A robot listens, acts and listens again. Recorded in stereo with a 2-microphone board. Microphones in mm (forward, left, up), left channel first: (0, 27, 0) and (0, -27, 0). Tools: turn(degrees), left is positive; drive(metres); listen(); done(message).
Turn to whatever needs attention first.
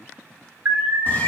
turn(degrees=-45)
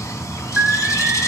turn(degrees=-10)
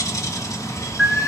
done("Facing the alarm, 1 to 2 m away.")